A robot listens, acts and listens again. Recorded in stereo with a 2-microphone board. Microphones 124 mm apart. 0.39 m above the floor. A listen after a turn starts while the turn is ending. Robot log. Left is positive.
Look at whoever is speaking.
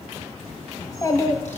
note: The child speaking: about 30° left or 150° left.
cmd yaw +30
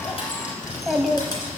end: Found it: a child speaking, straight ahead.